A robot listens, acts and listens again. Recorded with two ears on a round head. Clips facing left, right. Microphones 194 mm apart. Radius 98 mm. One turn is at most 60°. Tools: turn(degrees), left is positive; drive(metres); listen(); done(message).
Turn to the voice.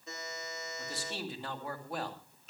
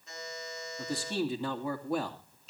turn(degrees=-60)
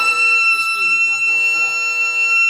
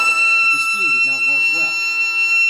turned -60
turn(degrees=-30)
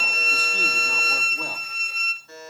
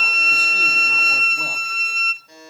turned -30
listen()
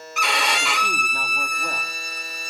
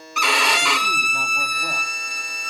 done("Facing where the man speaking came from. I can't hear it now.")